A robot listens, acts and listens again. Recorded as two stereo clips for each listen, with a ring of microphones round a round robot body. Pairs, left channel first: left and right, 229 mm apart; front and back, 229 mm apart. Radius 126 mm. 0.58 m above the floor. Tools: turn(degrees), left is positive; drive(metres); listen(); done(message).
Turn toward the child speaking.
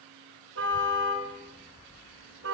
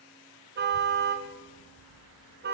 turn(degrees=10)
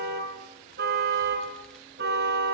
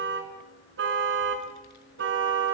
done("Found it: a child speaking, straight ahead, over 4 m away.")